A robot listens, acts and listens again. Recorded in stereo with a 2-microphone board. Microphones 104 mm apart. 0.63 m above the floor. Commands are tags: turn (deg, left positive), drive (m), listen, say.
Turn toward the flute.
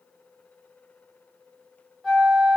<turn deg="30"/>
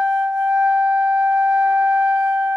<turn deg="-30"/>
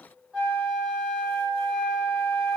<turn deg="-10"/>
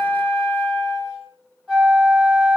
<say>Found it: a flute, straight ahead, 1 to 2 m away.</say>